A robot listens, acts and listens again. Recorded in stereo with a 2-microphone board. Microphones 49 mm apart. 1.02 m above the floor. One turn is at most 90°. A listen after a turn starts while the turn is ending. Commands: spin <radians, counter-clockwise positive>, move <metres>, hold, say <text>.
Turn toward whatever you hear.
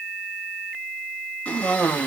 spin 0.44
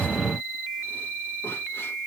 hold
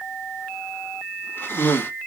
spin 1.57
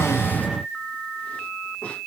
spin 0.61
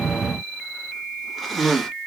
say Facing the cough, 1 to 2 m away.